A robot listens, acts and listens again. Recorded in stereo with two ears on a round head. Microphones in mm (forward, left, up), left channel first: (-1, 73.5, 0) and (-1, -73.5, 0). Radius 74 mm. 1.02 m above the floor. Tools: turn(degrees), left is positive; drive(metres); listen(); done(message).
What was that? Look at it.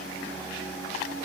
listen()
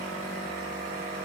listen()
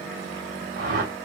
turn(degrees=-55)
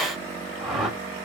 done("Found it: a whoosh, straight ahead, 1 to 2 m away.")